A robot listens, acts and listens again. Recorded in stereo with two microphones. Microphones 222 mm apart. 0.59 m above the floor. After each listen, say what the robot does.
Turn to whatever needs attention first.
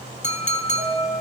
Turn 55° right.
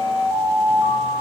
Facing the alarm, over 4 m away.